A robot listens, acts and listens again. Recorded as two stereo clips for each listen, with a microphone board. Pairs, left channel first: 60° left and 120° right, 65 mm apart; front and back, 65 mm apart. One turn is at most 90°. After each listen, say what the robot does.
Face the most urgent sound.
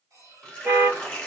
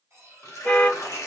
Turn 75° right.
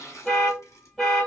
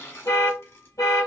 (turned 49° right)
Turn 25° right.
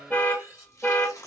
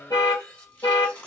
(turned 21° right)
Facing the alarm, 1 to 2 m away.